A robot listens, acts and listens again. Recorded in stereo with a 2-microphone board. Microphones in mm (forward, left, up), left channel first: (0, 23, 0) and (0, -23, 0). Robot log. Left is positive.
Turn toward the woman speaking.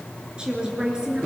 note: The woman speaking: about 15° right or 165° right.
cmd yaw -15
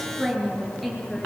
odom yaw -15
cmd yaw +30
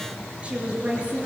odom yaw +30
note: So it is at 20° right.
cmd yaw -20
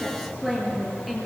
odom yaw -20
end: Facing the woman speaking, over 4 m away.